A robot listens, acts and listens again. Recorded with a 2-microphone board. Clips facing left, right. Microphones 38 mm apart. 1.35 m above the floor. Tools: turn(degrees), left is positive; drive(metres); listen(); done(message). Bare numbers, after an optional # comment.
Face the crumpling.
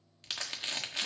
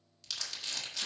# The crumpling: about 40° left or 140° left.
turn(40)
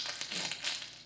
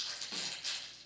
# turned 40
# So it is at 95° left.
turn(95)
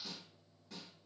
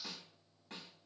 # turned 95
listen()
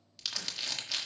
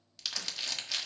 done("Facing the crumpling.")